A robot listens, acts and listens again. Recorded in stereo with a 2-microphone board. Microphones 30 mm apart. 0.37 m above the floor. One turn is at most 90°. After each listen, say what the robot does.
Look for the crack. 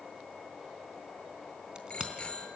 Turn 35° right.
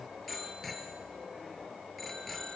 Keep listening.
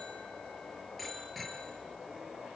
I heard a crack, but can't make it out now. It was about straight ahead or 110° right.